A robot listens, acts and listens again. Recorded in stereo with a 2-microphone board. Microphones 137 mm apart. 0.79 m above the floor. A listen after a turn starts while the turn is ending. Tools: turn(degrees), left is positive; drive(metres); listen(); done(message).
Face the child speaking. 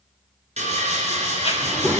turn(degrees=30)
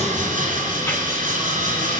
listen()
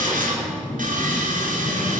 turn(degrees=20)
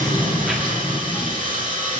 turn(degrees=30)
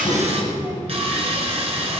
turn(degrees=-25)
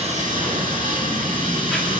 turn(degrees=10)
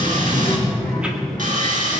done("Facing the child speaking.")